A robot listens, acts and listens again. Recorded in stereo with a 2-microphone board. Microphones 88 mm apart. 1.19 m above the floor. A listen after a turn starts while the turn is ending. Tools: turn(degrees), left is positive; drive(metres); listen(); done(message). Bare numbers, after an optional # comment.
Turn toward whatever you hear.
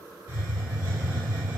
turn(-30)
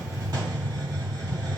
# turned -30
# So it is at 135° right.
turn(-135)
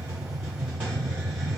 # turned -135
# The hiss is now 20° right.
turn(-20)
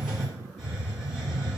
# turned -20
# The hiss is now 10° right.
turn(-10)
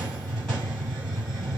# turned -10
done("Facing the hiss.")